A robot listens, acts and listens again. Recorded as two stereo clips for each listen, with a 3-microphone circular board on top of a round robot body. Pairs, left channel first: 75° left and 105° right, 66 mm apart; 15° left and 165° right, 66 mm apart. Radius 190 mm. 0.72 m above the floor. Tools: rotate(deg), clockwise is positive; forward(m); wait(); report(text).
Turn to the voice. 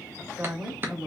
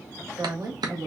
rotate(-165)
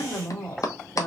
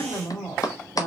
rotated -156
rotate(-10)
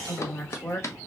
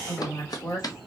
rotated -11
report("Facing the woman speaking, 2 to 4 m away.")